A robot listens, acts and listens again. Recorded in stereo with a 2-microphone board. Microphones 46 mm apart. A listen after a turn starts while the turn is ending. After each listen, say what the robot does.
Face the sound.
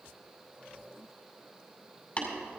Turn 35° left.
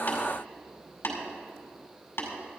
Turn 110° left.
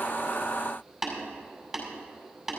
Turn 10° right.
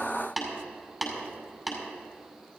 Facing the tapping.